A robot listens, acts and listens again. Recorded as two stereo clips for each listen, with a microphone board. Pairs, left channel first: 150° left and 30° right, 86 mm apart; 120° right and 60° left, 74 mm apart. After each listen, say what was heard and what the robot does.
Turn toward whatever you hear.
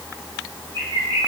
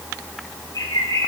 The bird: 155° right. Turn 155° right.
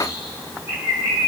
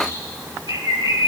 The bird is now 35° left. Turn 35° left.
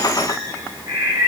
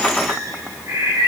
The bird is now 20° left. Turn 20° left.
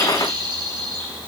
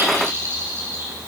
Facing the bird, over 4 m away.